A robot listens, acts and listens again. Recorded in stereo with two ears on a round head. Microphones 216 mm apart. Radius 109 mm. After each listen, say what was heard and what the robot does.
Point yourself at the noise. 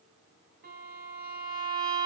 The violin: about 40° right or 140° right. Turn 40° right.
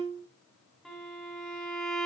Found it: a violin, straight ahead, 2 to 4 m away.